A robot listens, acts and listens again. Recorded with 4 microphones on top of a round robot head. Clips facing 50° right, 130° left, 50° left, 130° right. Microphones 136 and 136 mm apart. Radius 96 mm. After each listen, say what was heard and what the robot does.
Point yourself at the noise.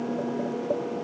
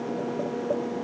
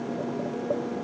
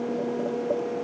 Keep listening.
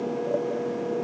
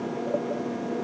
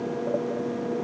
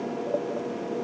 Keep listening.
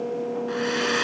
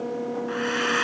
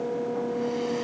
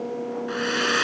The hair dryer: 110° right. Turn 110° right.
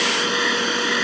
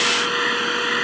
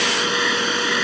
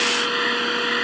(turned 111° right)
Facing the hair dryer.